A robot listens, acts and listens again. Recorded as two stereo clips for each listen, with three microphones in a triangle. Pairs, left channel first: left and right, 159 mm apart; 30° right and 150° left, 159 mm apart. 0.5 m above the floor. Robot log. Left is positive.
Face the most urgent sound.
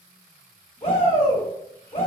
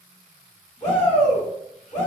note: The shout: 40° left.
cmd yaw +40
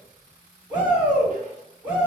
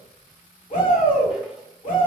note: The shout is now 10° right.
cmd yaw -10
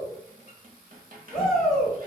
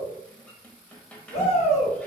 end: Facing the shout, 1 to 2 m away.